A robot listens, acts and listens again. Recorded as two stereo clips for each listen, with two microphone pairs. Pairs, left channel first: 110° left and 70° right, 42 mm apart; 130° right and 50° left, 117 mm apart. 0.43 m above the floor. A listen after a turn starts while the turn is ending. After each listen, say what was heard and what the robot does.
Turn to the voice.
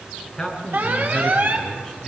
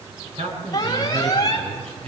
The man speaking: 30° left. Turn 30° left.
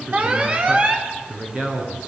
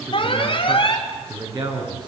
Facing the man speaking.